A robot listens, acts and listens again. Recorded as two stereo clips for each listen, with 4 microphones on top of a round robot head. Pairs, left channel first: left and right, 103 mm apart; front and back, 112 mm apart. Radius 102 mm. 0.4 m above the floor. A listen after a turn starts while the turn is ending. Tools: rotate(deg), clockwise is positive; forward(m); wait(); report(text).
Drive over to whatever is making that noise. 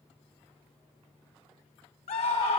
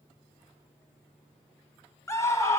rotate(-65)
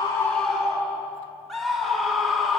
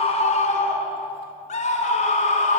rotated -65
forward(1.0)
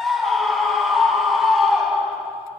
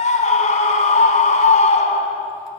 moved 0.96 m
forward(1.0)
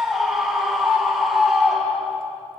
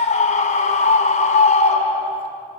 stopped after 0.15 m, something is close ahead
report("Blocked. The scream is further on, straight ahead.")